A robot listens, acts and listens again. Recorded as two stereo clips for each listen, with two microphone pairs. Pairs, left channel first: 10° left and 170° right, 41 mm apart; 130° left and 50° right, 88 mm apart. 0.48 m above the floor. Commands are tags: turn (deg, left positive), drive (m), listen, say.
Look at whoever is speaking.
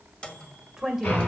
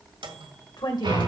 <turn deg="105"/>
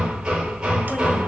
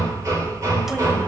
<listen/>
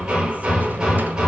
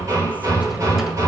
<listen/>
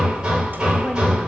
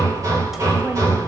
<say>I heard a woman speaking from this way, but can't make it out now.</say>